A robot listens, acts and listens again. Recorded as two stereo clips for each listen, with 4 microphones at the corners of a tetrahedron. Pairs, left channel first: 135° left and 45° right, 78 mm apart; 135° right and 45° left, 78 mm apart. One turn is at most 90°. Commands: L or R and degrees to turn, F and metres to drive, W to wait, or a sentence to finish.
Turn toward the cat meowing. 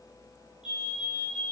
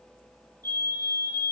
W
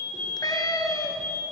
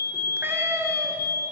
L90
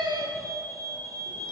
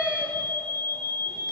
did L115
R30
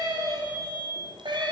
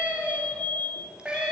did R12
R30
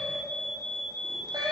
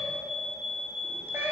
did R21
R15
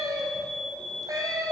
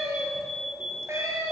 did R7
Facing the cat meowing.